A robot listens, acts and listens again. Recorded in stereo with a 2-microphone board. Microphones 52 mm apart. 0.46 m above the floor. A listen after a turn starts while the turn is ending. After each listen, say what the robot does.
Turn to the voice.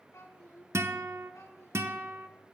Turn 90° left.
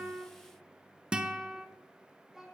Turn 10° right.
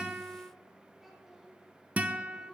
Found it: a child speaking, straight ahead.